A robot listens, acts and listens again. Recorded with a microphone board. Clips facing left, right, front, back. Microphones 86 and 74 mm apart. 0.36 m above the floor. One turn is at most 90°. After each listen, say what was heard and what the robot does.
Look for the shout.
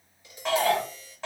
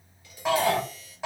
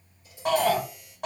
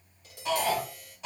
The shout: 10° right. Turn 10° right.
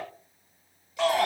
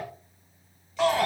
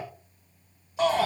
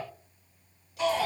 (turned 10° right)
Found it: a shout, straight ahead, 1 to 2 m away.